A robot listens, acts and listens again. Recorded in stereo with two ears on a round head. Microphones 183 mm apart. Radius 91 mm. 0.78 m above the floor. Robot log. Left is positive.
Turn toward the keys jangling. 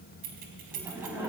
note: The keys jangling: about 45° right or 135° right.
cmd yaw -45
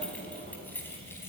note: So it is at 15° left.
cmd yaw +15
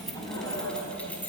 note: The keys jangling is now 10° left.
cmd yaw +10
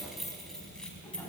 end: Found it: keys jangling, straight ahead, over 4 m away.